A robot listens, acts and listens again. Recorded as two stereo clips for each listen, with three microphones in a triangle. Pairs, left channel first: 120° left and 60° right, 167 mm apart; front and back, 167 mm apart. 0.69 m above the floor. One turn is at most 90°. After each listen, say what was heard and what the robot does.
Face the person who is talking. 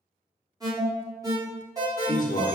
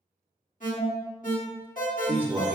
The man speaking: 105° left. Turn 90° left.
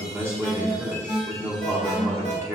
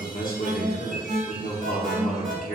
The man speaking is now 10° left. Turn 10° left.
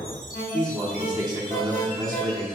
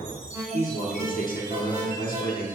Facing the man speaking, 1 to 2 m away.